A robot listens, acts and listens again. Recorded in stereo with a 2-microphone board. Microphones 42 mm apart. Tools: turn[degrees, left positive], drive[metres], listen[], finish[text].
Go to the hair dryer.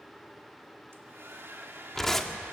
Thought: The hair dryer: about 65° right or 115° right.
Action: turn[-65]
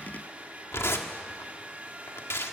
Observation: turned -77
Thought: So it is at 35° right.
Action: turn[-35]
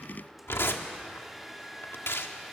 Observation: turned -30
Action: drive[1.0]
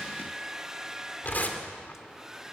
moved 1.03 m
Thought: The hair dryer is now 15° right.
Action: turn[-15]
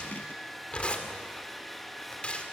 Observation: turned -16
Action: drive[1.0]
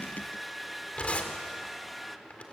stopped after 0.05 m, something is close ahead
Action: finish[Arrived at the hair dryer, straight ahead.]